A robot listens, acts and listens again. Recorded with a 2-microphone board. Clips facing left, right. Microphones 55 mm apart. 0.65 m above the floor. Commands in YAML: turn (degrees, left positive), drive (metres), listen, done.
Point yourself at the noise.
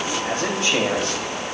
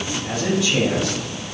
turn: 40
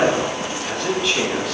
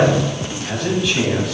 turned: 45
done: "Found it: a man speaking, straight ahead."